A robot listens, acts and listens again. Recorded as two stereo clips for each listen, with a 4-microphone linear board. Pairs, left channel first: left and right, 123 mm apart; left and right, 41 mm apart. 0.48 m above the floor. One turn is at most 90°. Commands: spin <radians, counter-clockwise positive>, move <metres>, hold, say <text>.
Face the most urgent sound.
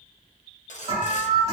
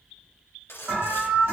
spin -1.05
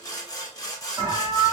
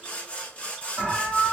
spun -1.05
spin -0.70
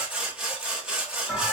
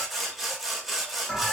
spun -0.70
say Found it: an alarm, straight ahead, 2 to 4 m away.